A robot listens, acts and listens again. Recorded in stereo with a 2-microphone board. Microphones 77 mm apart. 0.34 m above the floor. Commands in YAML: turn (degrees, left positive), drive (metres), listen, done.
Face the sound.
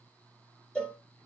turn: 30
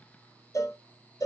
turn: 135
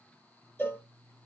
turn: 25
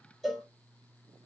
done: "Found it: a cowbell, straight ahead."